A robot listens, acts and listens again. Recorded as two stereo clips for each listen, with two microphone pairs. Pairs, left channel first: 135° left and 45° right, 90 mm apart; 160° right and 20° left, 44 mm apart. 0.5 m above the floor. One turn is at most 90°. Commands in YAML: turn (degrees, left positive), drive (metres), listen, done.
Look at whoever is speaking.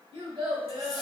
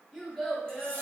turn: -80
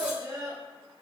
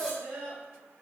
done: "Facing the child speaking, 1 to 2 m away."